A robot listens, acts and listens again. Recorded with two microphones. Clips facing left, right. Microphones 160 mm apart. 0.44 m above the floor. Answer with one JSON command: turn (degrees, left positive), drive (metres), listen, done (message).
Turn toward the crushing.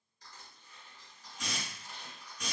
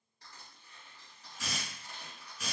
{"turn": -70}
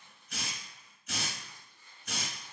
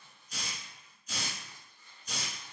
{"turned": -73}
{"turn": -35}
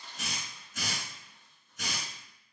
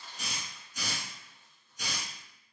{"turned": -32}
{"done": "Found it: crushing, straight ahead, 1 to 2 m away."}